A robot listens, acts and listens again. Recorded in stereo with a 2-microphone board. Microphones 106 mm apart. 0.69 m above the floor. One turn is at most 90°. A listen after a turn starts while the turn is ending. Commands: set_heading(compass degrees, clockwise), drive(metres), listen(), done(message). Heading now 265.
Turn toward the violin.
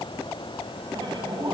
listen()
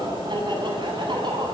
listen()
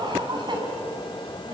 done("I can't make out a violin to turn to.")